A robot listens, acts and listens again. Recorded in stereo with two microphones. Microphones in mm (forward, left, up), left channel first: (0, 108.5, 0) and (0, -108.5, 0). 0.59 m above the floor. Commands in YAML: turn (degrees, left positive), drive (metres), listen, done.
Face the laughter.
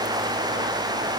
listen: true
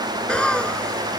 turn: 30
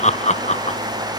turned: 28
turn: 150
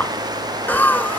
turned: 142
done: "Facing the laughter."